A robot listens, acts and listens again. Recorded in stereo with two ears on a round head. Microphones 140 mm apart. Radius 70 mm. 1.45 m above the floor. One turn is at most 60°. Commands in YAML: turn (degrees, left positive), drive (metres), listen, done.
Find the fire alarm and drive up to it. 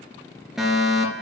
turn: -30
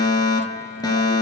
turn: 25
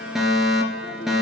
drive: 1.0
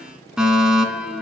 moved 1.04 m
drive: 1.0
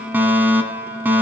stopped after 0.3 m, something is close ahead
turn: -15
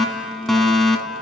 done: "I am next to the fire alarm."